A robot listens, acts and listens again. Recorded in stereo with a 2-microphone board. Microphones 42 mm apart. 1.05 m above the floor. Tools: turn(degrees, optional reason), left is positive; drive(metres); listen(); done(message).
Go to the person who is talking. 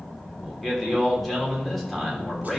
turn(degrees=30)
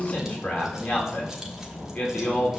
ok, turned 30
turn(degrees=145, reason="So it is at 145° left.")
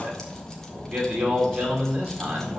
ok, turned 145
turn(degrees=-30, reason="The man speaking is now 30° right.")
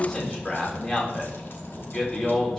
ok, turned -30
turn(degrees=15, reason="The man speaking is now 15° left.")
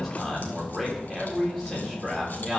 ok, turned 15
drive(metres=1.0)
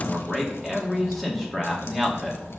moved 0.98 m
drive(metres=1.0)
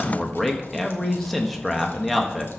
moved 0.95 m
drive(metres=1.0)
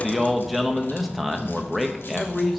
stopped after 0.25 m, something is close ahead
done("Arrived at the man speaking, straight ahead.")